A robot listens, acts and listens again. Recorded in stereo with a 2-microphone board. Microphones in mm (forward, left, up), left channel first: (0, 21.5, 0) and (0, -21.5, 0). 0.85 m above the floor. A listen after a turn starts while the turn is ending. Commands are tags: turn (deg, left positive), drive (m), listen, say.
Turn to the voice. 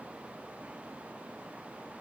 <listen/>
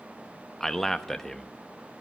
<turn deg="30"/>
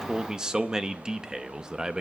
<turn deg="-20"/>
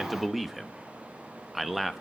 <say>Found it: a man speaking, straight ahead, under 1 m away.</say>